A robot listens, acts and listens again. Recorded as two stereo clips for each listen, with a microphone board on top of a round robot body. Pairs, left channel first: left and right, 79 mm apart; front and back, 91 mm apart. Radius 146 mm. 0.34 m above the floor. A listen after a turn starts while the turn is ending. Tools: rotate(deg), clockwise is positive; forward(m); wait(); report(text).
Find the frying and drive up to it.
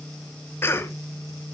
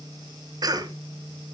wait()
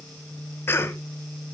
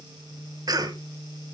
wait()
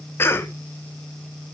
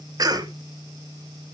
report("I can't make out frying to turn to.")